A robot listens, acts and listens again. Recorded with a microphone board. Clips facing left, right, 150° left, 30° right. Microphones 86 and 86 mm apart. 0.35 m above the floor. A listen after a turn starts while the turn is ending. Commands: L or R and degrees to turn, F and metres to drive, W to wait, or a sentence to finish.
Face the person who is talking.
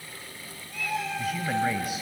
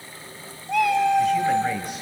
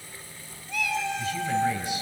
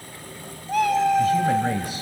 Facing the man speaking.